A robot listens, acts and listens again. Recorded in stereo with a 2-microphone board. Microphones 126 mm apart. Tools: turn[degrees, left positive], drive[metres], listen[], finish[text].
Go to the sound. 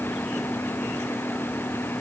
Action: listen[]
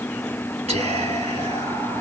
Thought: The whispering: about 65° right or 115° right.
Action: turn[-65]
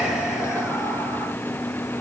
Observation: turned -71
Thought: So it is at 10° right.
Action: turn[-10]
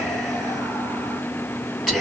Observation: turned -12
Action: drive[1.0]
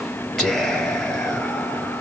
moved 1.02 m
Action: drive[1.0]
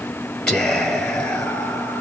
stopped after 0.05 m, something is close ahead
Action: finish[Arrived at the whispering, straight ahead.]